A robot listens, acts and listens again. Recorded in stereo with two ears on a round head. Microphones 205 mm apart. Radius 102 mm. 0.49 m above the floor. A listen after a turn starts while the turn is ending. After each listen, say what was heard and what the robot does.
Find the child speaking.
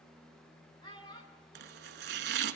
The child speaking: about 20° left or 160° left. Turn 20° left.
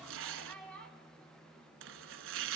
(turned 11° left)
Turn 30° left.
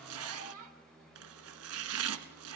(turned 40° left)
So it is at 40° right. Turn 40° right.
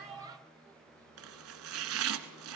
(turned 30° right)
Nothing new. It was at 10° right. Turn 10° right.
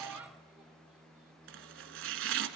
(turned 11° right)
Keep listening.
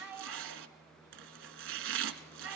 The child speaking is now 10° right. Turn 10° right.
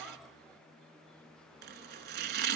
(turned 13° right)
Keep listening.
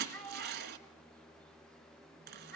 Found it: a child speaking, straight ahead, 2 to 4 m away.